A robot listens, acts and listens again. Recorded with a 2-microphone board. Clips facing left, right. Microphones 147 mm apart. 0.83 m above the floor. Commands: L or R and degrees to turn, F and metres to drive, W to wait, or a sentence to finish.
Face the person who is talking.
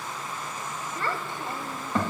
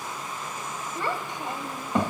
R20
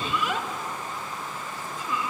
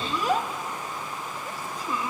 R140
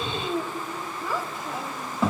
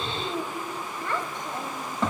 L10
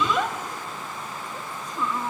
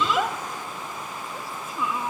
Found it: a child speaking, straight ahead, 1 to 2 m away.